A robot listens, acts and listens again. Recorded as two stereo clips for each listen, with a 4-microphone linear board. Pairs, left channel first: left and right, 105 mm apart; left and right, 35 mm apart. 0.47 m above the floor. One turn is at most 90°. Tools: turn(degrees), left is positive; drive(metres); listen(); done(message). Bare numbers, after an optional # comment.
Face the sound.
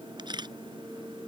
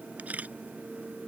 # The camera shutter: about 45° right or 135° right.
turn(-45)
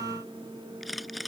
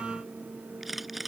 done("Facing the camera shutter.")